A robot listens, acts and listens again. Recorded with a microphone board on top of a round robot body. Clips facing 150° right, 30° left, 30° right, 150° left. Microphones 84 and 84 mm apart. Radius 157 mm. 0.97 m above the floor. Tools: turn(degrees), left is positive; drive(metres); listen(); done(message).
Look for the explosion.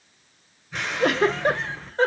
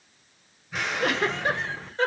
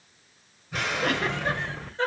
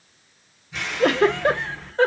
turn(degrees=-60)
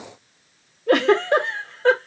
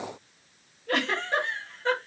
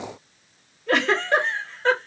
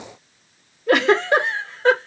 done("Facing where the explosion came from. I can't hear it now.")